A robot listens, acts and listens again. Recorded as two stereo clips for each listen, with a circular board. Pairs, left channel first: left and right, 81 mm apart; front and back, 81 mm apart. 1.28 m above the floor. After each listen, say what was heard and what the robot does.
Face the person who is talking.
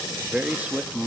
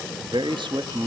The man speaking: 165° right. Turn 165° right.
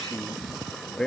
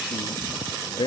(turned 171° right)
The man speaking is now 10° left. Turn 10° left.
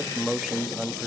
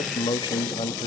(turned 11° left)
Found it: a man speaking, straight ahead, 1 to 2 m away.